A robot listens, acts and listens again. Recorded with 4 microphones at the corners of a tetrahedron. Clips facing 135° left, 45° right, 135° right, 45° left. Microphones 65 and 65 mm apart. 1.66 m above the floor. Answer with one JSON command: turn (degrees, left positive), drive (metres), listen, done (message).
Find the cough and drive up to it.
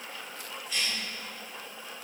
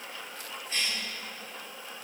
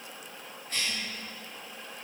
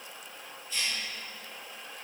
{"turn": -95}
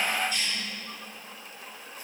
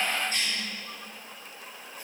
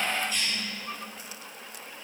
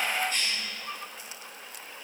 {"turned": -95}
{"drive": 1.0}
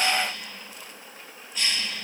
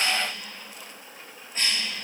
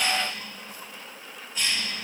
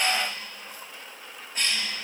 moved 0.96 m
{"drive": 1.0}
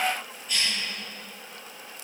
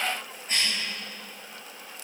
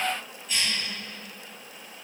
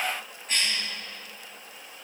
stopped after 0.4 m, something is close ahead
{"done": "Blocked. The cough is further on, straight ahead."}